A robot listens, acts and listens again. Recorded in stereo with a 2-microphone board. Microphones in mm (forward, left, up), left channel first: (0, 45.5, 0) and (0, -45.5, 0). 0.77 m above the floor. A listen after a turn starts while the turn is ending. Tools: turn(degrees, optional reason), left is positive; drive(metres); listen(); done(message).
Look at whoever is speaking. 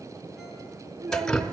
turn(degrees=-45, reason="The child speaking: about 45° right or 135° right.")
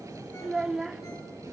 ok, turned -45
done("Found it: a child speaking, straight ahead, 1 to 2 m away.")